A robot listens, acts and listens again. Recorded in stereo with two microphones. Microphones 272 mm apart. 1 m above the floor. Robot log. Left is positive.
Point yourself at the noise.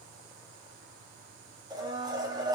cmd yaw -30
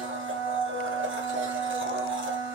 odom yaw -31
note: So it is at 135° right.
cmd yaw -135
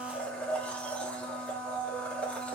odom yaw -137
end: Facing the blender.